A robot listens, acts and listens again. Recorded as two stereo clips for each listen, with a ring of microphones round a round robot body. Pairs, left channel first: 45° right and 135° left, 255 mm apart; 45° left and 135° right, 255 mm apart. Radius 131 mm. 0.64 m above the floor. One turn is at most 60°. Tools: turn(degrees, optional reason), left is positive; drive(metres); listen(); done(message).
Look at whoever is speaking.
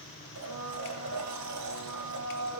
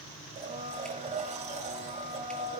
listen()
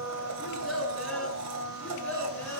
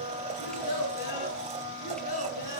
turn(degrees=40, reason="The child speaking: 40° left.")
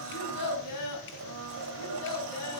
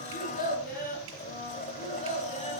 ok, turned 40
turn(degrees=-20, reason="The child speaking is now 20° right.")
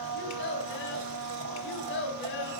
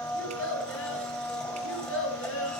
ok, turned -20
done("Found it: a child speaking, straight ahead.")